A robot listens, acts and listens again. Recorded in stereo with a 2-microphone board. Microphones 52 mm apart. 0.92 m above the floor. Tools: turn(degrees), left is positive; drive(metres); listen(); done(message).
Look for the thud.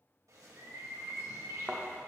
turn(degrees=-30)
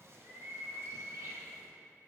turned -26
listen()
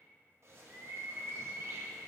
done("I heard a thud, but can't make it out now. It was about 10° left or 140° right.")